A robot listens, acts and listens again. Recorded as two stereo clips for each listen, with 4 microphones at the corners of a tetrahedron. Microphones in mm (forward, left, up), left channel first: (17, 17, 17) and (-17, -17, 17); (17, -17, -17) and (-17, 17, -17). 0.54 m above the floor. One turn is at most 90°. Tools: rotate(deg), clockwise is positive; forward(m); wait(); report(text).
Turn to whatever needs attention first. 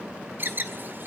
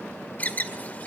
rotate(90)
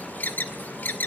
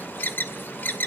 report("Facing the alarm, 1 to 2 m away.")